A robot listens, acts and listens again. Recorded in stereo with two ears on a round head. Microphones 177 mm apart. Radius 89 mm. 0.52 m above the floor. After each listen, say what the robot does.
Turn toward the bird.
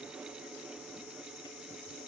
Keep listening.
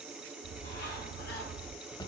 Turn 60° left.
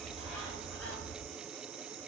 Facing the bird.